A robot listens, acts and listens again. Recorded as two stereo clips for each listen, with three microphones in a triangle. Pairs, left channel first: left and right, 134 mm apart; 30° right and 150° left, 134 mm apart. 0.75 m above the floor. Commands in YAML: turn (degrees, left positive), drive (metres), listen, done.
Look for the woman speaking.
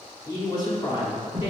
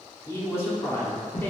turn: 45
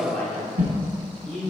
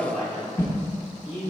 turn: 15
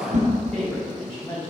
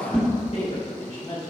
turn: 10
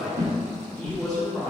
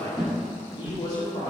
done: "Found it: a woman speaking, straight ahead."